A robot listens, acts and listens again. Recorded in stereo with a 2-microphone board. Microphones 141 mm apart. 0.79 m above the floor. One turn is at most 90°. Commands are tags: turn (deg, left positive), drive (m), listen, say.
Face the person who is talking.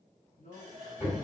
<turn deg="65"/>
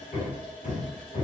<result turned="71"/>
<listen/>
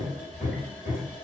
<listen/>
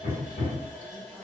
<say>I heard a man speaking, but can't make it out now. It was about 5° right or 45° left.</say>